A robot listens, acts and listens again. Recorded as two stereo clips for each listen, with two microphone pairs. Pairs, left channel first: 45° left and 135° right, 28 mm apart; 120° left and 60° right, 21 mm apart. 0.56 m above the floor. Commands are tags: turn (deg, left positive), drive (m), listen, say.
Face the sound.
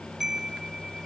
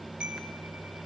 <turn deg="-55"/>
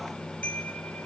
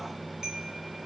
<listen/>
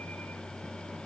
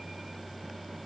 <listen/>
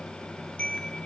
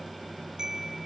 <say>Facing the chime.</say>